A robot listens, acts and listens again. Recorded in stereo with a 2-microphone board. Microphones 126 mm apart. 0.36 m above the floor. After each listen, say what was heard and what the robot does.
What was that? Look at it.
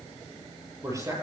The man speaking: about 25° right or 155° right. Turn 25° right.
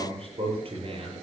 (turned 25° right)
So it is at 130° right. Turn 130° right.
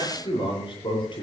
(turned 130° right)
The man speaking is now 40° left. Turn 40° left.
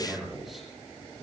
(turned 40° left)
Found it: a man speaking, straight ahead, over 4 m away.